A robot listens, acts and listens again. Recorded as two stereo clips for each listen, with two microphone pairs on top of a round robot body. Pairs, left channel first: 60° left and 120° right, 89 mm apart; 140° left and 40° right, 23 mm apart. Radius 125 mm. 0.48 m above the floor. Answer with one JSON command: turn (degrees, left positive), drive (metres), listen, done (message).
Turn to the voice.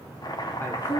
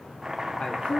{"turn": 120}
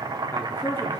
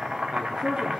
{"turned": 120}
{"done": "Facing the man speaking, 1 to 2 m away."}